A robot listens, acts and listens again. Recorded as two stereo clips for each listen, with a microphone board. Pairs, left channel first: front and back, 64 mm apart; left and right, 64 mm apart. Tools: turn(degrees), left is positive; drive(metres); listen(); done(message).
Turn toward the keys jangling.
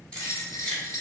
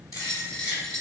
turn(degrees=75)
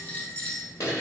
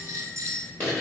turn(degrees=30)
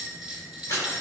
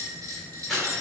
done("Facing the keys jangling, 1 to 2 m away.")